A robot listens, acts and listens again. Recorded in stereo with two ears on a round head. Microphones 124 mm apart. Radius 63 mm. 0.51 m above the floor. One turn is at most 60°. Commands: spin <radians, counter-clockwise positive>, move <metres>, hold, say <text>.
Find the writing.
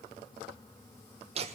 hold
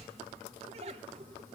hold
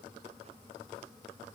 say I can't make out writing, only laughter.